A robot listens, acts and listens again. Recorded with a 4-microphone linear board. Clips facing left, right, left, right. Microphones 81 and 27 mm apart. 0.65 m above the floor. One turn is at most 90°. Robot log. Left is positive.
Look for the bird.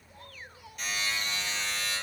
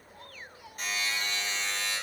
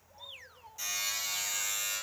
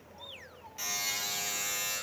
cmd idle
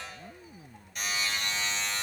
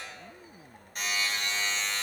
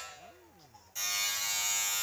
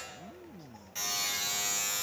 cmd idle
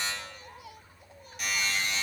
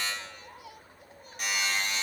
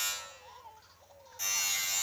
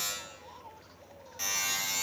end: I can't make out a bird to turn to.